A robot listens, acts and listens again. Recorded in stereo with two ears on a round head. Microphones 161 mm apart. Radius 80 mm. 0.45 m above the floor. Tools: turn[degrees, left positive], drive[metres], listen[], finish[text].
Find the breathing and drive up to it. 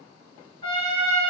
Action: listen[]
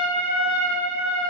Action: listen[]
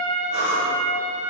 Thought: The breathing: about 70° left or 110° left.
Action: turn[70]
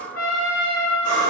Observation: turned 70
Thought: So it is at 45° left.
Action: turn[45]
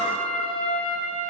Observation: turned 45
Action: listen[]
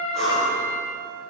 Action: drive[1.0]
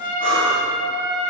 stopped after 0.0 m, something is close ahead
Action: finish[Blocked. The breathing is further on, straight ahead.]